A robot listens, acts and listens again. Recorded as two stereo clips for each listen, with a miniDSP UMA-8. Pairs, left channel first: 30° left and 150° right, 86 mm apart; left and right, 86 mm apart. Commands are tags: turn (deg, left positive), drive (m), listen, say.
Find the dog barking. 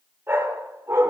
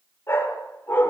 <turn deg="155"/>
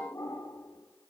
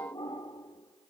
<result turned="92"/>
<turn deg="75"/>
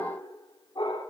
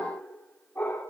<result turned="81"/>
<turn deg="25"/>
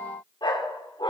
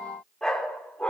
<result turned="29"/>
<turn deg="15"/>
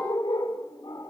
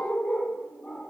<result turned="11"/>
<turn deg="15"/>
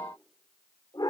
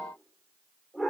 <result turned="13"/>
<say>Found it: a dog barking, straight ahead, 1 to 2 m away.</say>